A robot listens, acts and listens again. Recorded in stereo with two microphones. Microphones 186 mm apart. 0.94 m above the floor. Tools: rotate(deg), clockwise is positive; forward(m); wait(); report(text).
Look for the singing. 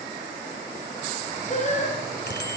rotate(-40)
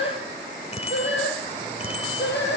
rotate(-105)
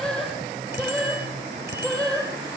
report("Found it: singing, straight ahead, 2 to 4 m away.")